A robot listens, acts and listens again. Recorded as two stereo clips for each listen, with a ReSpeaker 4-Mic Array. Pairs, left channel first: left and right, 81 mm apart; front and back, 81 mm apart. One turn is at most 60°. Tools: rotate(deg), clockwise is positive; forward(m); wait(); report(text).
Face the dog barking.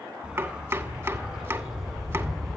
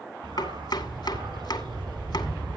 rotate(-60)
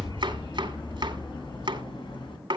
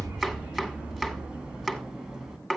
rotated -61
rotate(-60)
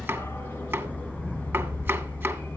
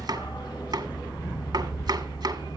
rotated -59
rotate(-20)
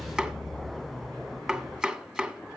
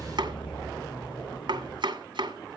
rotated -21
report("Facing the dog barking, 2 to 4 m away.")